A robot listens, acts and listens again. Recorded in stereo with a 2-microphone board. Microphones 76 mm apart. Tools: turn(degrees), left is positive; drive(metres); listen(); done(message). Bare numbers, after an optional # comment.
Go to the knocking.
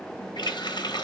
listen()
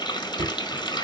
# The knocking: about 70° right or 110° right.
turn(-70)
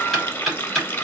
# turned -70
drive(1.0)
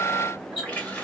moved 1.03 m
drive(1.0)
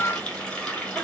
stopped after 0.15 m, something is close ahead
listen()
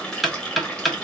done("I am next to the knocking.")